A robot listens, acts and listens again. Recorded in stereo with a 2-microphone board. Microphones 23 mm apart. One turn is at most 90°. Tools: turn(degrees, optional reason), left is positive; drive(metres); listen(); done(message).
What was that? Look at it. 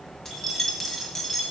turn(degrees=30)
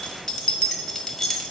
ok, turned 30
turn(degrees=20, reason="The keys jangling: about 20° left or 160° left.")
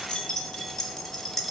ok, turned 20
turn(degrees=30)
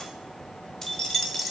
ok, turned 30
turn(degrees=30)
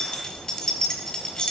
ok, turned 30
turn(degrees=90, reason="So it is at 140° left.")
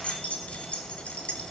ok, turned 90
turn(degrees=65, reason="The keys jangling is now 65° left.")
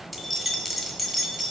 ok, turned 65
done("Facing the keys jangling.")